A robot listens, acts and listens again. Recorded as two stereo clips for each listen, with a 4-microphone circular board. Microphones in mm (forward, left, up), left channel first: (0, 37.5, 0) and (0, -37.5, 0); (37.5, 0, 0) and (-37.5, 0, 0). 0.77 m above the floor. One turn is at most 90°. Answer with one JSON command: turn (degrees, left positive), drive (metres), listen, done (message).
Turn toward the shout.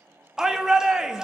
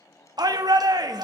{"turn": -90}
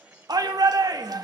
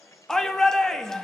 {"turn": -85}
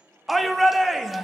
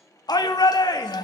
{"done": "Found it: a shout, straight ahead, under 1 m away."}